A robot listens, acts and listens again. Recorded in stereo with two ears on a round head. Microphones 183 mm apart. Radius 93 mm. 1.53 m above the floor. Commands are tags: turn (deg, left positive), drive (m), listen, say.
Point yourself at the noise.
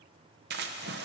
<turn deg="-50"/>
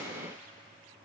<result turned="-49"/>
<listen/>
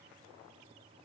<say>I heard a splash, but can't make it out now. It was about 5° right or 80° right.</say>